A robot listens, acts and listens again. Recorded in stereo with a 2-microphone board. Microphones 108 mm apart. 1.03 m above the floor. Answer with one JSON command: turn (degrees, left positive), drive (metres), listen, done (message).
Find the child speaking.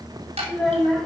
{"turn": 30}
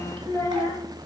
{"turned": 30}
{"turn": 155}
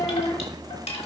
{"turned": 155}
{"turn": 40}
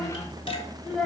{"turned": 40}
{"done": "Found it: a child speaking, straight ahead, 2 to 4 m away."}